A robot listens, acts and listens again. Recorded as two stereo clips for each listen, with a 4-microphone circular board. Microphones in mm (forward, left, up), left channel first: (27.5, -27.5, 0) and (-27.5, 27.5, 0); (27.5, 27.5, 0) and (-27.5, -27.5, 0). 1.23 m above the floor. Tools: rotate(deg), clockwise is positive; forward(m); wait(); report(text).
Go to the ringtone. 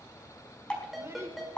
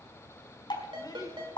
rotate(135)
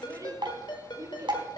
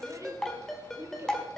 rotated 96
rotate(40)
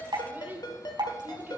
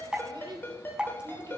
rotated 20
rotate(20)
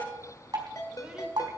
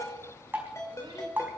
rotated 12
forward(1.0)
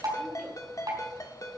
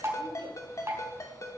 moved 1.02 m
forward(1.0)
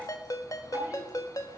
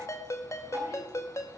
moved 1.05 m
forward(1.0)
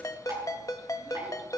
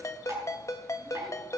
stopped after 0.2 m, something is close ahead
report("I am next to the ringtone.")